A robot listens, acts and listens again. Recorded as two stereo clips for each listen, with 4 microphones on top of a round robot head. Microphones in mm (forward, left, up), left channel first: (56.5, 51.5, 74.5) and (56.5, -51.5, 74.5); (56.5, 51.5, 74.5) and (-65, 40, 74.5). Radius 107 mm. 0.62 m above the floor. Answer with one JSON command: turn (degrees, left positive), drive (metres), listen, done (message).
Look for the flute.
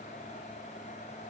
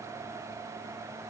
{"listen": true}
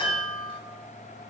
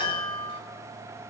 {"listen": true}
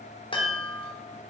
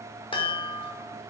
{"done": "I can't make out a flute to turn to."}